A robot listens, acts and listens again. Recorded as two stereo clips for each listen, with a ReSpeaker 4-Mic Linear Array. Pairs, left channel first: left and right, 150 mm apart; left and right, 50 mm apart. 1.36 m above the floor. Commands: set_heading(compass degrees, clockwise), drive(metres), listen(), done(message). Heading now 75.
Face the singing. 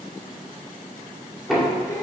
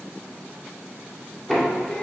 set_heading(50)
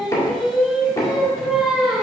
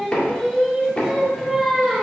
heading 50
done("Found it: singing, straight ahead, 1 to 2 m away.")